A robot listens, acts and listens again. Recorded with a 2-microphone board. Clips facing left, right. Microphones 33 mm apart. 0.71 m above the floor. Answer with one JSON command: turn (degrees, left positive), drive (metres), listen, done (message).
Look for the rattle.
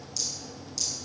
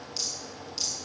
{"turn": -30}
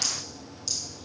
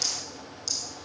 {"done": "Found it: a rattle, straight ahead, over 4 m away."}